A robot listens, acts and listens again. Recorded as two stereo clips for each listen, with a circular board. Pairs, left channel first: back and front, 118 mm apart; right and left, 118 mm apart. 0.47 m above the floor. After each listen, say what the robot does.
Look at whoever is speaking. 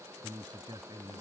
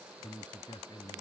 Turn 50° right.
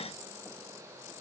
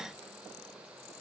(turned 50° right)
Keep listening.
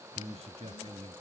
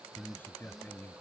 Turn 20° right.
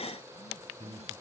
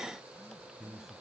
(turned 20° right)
Facing the man speaking.